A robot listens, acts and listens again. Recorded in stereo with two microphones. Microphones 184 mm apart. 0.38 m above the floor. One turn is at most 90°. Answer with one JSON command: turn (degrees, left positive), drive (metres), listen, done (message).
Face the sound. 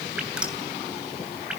{"turn": -30}
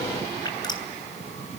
{"turn": 25}
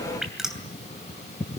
{"done": "Facing the dripping."}